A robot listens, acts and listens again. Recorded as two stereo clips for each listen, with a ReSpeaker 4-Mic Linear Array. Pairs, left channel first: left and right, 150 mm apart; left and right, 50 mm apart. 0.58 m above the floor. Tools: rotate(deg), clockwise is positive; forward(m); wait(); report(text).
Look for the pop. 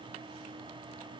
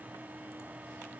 wait()
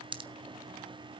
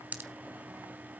rotate(35)
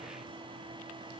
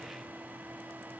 wait()
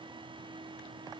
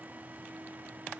report("I heard a pop, but can't make it out now. It was about straight ahead or 110° right.")